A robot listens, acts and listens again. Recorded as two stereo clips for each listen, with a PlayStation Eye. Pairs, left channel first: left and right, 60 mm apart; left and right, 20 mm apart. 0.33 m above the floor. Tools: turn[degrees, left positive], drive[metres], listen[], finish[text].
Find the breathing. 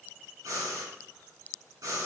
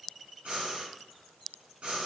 Thought: The breathing: about 70° right or 110° right.
Action: turn[-70]
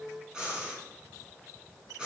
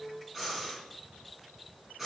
Thought: So it is at 15° right.
Action: turn[-15]
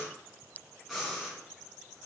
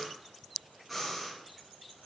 Action: finish[Facing the breathing, 2 to 4 m away.]